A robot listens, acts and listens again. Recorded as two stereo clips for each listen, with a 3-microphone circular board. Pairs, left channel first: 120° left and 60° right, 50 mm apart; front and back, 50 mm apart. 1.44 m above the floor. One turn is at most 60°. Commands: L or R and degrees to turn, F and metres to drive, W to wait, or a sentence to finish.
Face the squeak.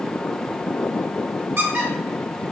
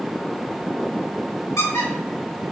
R20
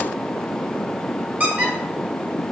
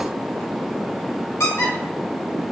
Found it: a squeak, straight ahead, 1 to 2 m away.